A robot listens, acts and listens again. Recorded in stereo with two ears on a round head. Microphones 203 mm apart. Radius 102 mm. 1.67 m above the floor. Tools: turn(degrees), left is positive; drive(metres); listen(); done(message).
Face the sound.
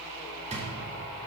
turn(degrees=-30)
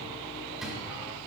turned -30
listen()
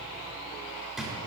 done("Found it: a drawer, straight ahead.")